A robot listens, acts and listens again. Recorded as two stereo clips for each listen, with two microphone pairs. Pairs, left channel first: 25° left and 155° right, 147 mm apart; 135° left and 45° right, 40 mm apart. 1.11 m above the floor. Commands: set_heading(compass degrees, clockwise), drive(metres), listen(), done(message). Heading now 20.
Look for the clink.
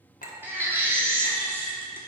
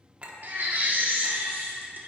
set_heading(5)
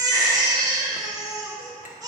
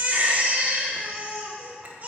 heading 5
listen()
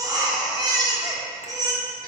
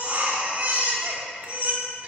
listen()
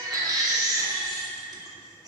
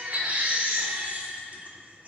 done("I heard a clink from this way, but can't make it out now.")